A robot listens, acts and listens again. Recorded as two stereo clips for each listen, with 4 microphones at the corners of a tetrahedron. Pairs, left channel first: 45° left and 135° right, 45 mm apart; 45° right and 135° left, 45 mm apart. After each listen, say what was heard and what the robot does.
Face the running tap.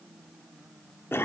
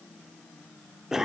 Keep listening.
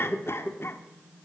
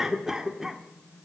Keep listening.
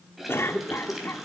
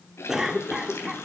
The running tap: 50° right. Turn 50° right.
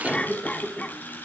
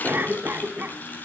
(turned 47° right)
Found it: a running tap, straight ahead, 2 to 4 m away.